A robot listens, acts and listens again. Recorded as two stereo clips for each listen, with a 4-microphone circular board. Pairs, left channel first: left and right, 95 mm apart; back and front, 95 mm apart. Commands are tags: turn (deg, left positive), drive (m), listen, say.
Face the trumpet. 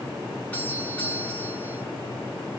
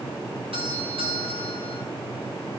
<listen/>
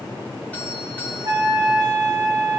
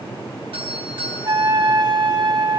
<turn deg="-30"/>
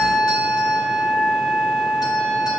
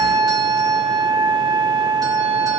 <say>Facing the trumpet, 2 to 4 m away.</say>